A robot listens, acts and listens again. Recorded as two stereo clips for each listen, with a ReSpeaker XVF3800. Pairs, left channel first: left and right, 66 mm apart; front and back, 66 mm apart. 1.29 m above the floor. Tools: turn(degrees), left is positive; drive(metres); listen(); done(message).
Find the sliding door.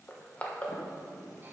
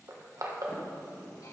turn(degrees=60)
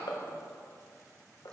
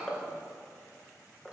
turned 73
turn(degrees=-15)
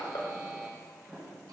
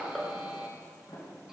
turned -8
done("Found it: a sliding door, straight ahead, 2 to 4 m away.")